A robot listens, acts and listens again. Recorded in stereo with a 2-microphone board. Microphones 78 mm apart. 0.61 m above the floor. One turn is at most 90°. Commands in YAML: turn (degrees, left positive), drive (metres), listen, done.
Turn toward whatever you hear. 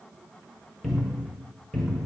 turn: 30
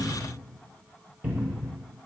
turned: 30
turn: -30
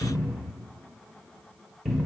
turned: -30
done: "Facing the cupboard door, under 1 m away."